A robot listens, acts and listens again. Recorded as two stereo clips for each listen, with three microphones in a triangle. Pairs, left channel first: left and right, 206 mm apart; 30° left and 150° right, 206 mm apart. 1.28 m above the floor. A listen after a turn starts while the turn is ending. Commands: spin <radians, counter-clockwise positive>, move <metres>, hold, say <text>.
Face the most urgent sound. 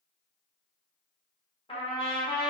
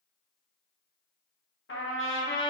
hold
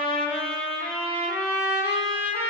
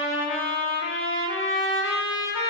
hold
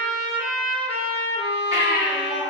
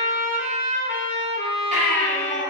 spin -1.75
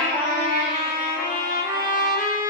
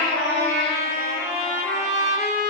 hold
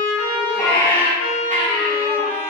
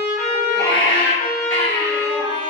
spin 0.17
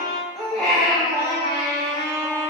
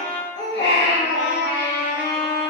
say Found it: a baby crying, straight ahead, 1 to 2 m away.